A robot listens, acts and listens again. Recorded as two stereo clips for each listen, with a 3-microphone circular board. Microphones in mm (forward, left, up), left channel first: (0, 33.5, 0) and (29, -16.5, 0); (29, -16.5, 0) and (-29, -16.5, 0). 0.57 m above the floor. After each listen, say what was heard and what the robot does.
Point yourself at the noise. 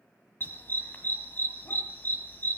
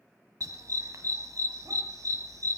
The dog barking: 175° left. Turn 175° left.
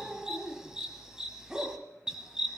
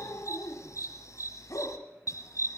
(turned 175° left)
The dog barking is now 20° left. Turn 20° left.
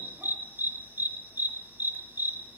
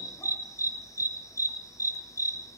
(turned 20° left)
Found it: a dog barking, straight ahead, 1 to 2 m away.